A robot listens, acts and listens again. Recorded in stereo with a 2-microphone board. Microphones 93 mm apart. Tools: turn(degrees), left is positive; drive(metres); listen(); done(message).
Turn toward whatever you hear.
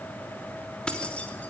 turn(degrees=30)
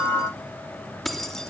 turn(degrees=30)
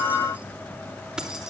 done("Facing the keys jangling, 2 to 4 m away.")